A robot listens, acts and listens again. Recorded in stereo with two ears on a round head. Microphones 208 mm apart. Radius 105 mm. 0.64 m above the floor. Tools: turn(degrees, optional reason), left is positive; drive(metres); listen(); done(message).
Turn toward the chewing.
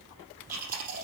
turn(degrees=-35, reason="The chewing: about 35° right or 145° right.")
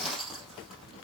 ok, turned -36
done("Facing the chewing.")